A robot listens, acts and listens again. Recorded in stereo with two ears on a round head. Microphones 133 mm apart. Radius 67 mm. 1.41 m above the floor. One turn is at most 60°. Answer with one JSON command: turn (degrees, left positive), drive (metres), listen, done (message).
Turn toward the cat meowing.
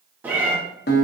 {"turn": -30}
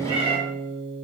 {"turn": -60}
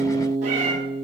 {"turn": -60}
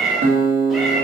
{"done": "Found it: a cat meowing, straight ahead, 1 to 2 m away."}